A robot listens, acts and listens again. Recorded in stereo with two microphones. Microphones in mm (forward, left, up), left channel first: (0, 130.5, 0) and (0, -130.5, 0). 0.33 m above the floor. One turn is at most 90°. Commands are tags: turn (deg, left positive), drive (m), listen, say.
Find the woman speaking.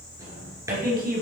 <turn deg="-35"/>
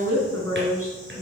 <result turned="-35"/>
<turn deg="-90"/>
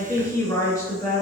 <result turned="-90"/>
<turn deg="10"/>
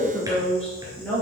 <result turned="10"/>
<say>Found it: a woman speaking, straight ahead.</say>